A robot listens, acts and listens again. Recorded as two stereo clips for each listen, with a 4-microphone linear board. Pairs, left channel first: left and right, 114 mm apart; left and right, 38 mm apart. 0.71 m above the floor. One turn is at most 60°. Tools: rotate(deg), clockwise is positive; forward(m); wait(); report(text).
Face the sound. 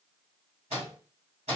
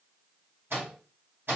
rotate(60)
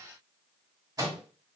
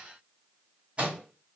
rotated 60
rotate(35)
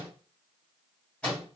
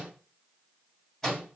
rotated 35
rotate(-10)
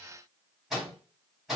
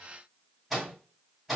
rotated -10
report("Found it: a microwave, straight ahead.")